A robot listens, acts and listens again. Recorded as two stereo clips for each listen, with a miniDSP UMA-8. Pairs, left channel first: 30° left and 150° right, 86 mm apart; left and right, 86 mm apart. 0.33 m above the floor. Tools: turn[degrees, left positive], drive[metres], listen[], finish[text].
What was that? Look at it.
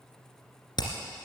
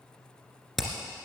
Action: finish[Facing the hammering, 2 to 4 m away.]